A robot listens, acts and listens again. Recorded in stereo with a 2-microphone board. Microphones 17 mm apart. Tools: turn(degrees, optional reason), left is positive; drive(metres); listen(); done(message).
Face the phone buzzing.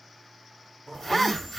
turn(degrees=25, reason="The phone buzzing: about 25° left or 155° left.")
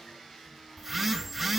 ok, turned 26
done("Found it: a phone buzzing, straight ahead, 1 to 2 m away.")